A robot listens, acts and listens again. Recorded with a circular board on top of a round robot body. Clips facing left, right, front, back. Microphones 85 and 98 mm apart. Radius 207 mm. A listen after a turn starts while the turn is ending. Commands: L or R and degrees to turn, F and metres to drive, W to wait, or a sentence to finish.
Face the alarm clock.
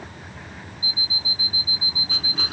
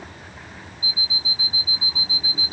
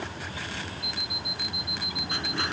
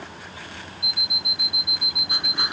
R155
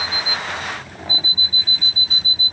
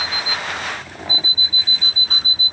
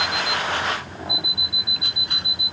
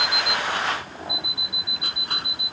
R35
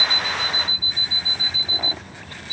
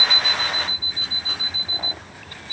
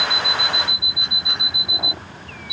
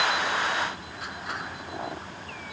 Found it: an alarm clock, straight ahead.